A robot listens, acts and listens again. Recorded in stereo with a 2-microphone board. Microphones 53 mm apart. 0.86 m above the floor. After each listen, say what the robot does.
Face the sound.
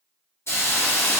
Turn 55° left.
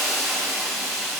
Found it: a hiss, straight ahead, under 1 m away.